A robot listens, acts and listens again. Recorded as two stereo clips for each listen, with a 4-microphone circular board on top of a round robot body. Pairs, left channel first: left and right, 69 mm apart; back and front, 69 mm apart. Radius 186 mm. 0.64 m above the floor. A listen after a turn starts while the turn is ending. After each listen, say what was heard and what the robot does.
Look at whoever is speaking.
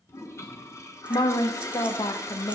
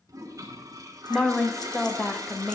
The woman speaking: 90° left. Turn 90° left.
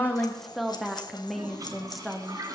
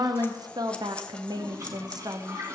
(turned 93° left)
Facing the woman speaking, 1 to 2 m away.